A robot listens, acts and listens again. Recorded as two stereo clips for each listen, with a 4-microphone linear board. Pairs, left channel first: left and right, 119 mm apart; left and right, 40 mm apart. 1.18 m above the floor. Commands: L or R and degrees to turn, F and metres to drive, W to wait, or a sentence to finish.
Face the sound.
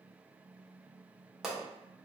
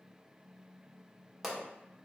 R30
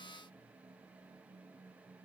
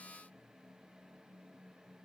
W
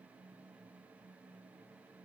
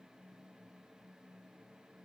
I heard a pop, but can't make it out now. It was about 25° left or 145° right.